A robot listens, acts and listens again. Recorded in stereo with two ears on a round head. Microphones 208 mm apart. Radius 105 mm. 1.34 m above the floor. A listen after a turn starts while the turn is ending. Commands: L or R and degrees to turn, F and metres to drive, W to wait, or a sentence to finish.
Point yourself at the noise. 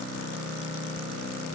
W
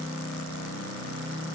W
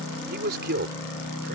R45
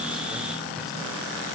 W
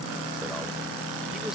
W
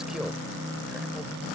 I heard a man speaking, but can't make it out now. It was about straight ahead or 90° right.